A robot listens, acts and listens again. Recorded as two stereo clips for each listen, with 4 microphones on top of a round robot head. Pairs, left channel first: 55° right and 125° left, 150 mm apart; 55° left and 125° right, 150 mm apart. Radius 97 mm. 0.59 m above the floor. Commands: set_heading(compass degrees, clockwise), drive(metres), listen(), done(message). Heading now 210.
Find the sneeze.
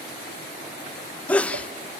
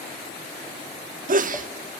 set_heading(345)
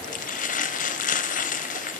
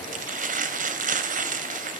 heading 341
done("I heard a sneeze from this way, but can't make it out now.")